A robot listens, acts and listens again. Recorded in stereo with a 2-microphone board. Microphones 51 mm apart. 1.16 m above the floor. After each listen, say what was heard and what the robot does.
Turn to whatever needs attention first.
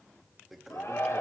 Turn 90° left.
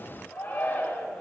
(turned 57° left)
So it is at 35° left. Turn 35° left.
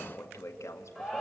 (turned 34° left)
Facing the shout.